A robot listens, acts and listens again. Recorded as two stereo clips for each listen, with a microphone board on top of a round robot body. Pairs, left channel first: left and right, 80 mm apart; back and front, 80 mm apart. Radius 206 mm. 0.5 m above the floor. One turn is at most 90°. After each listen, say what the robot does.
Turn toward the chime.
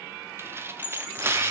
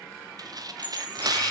Turn 90° left.
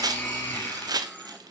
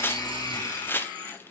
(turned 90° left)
Turn 15° left.
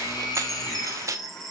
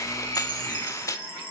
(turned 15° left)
Facing the chime.